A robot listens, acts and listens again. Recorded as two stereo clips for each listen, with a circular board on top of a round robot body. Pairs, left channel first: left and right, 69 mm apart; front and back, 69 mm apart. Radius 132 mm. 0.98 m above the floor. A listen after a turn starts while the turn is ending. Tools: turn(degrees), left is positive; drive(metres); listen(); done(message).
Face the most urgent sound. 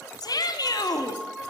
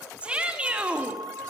turn(degrees=110)
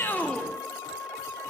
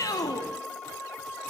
listen()
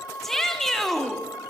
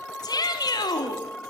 done("Found it: a shout, straight ahead, 2 to 4 m away.")